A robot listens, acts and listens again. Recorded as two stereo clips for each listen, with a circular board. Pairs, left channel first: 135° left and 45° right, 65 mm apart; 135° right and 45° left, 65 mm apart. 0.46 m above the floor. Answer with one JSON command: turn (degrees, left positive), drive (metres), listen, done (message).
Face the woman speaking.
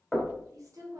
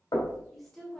{"turn": -50}
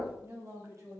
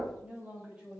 {"turn": -25}
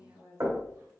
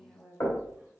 {"turn": -25}
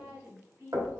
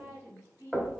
{"done": "Found it: a woman speaking, straight ahead."}